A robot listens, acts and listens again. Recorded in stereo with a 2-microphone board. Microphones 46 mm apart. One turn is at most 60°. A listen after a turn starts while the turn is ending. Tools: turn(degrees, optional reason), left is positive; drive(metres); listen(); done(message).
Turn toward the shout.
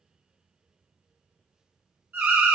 listen()
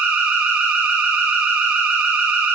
listen()
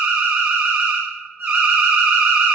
done("I can't make out a shout to turn to.")